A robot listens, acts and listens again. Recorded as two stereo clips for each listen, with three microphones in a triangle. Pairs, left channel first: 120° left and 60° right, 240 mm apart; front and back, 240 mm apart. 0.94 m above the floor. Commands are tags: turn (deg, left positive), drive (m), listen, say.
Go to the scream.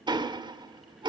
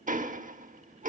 <listen/>
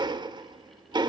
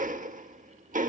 <listen/>
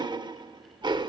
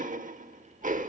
<say>I can't make out a scream to turn to.</say>